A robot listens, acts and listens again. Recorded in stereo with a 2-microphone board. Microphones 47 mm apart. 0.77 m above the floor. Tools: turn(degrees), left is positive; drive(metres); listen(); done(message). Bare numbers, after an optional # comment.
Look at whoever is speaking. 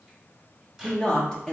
turn(30)
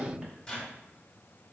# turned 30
# So it is at 15° right.
turn(-15)
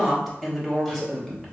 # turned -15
done("Found it: a woman speaking, straight ahead, 1 to 2 m away.")